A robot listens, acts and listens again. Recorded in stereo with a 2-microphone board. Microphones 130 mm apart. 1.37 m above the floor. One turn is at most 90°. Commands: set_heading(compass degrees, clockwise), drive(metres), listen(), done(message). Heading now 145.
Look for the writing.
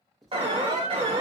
set_heading(115)
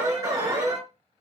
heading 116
listen()
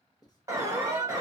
set_heading(26)
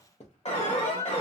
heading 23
set_heading(328)
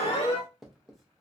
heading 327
done("Facing the writing, under 1 m away.")